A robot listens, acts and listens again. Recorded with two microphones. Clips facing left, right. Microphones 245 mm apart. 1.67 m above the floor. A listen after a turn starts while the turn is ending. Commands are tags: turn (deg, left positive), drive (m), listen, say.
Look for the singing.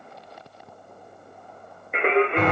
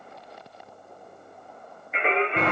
<turn deg="65"/>
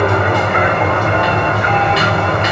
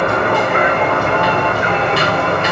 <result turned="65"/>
<listen/>
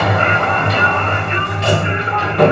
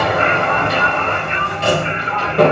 <listen/>
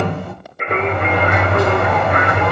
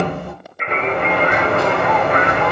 <turn deg="55"/>
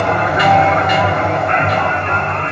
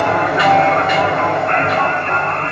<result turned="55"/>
<listen/>
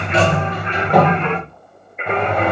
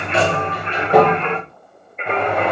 <say>Facing the singing, under 1 m away.</say>